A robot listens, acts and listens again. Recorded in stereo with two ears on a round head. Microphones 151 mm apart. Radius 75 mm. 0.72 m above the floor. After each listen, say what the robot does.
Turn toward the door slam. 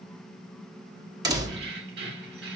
Turn 25° right.
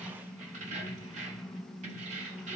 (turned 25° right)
Keep listening.
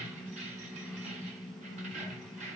I heard a door slam, but can't make it out now. It was about straight ahead or 130° right.